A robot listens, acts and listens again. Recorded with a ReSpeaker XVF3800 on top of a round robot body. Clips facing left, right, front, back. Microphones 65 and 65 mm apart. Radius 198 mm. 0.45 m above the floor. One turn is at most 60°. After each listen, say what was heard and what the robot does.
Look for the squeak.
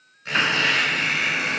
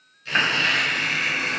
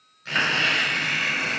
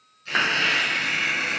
The squeak: 50° left. Turn 50° left.
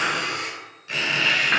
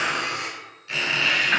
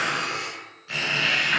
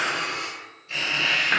The squeak is now 15° left. Turn 15° left.
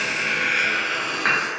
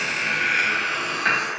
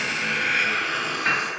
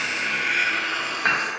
Found it: a squeak, straight ahead.